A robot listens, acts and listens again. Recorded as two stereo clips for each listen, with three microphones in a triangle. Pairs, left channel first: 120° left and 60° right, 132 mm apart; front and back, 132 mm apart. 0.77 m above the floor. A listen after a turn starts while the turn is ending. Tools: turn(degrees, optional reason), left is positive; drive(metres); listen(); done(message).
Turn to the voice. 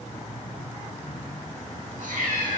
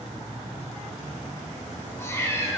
listen()
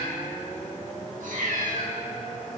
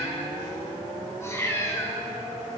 listen()
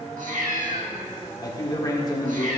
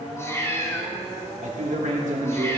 turn(degrees=180, reason="The man speaking: straight behind.")
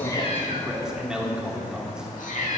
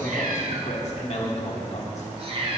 turn(degrees=25, reason="The man speaking is now 25° left.")
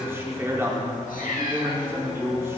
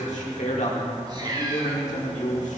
turn(degrees=10, reason="The man speaking is now 10° left.")
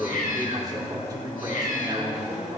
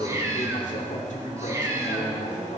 done("Found it: a man speaking, straight ahead, 1 to 2 m away.")